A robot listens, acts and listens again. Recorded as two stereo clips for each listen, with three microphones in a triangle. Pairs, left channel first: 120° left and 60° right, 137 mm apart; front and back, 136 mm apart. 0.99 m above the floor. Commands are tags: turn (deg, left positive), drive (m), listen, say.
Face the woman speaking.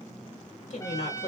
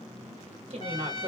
<turn deg="140"/>
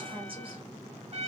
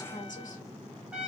<turn deg="-10"/>
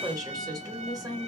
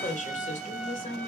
<say>Found it: a woman speaking, straight ahead, 1 to 2 m away.</say>